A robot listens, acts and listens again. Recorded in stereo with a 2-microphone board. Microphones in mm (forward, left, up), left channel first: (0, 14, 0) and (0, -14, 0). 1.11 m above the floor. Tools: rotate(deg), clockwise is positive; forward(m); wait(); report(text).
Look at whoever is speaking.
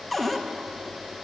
wait()
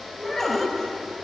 rotate(-30)
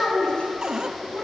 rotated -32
rotate(-130)
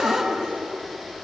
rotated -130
report("Facing the child speaking, over 4 m away.")